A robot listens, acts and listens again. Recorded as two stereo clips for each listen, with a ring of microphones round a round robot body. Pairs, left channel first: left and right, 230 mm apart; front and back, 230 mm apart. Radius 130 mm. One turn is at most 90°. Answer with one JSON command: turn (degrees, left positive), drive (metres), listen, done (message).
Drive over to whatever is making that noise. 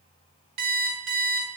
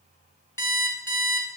{"turn": -80}
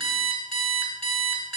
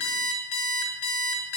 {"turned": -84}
{"drive": 1.0}
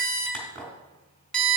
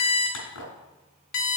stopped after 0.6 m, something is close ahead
{"done": "Something is in my way. I am facing the alarm clock but have not reached it."}